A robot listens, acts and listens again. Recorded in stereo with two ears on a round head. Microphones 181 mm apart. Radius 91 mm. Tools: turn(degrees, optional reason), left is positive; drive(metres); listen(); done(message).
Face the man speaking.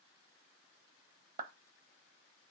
listen()
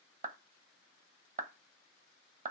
listen()
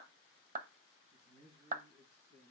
turn(degrees=-30, reason="The man speaking: about 30° right or 150° right.")
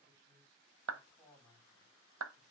done("Facing the man speaking, over 4 m away.")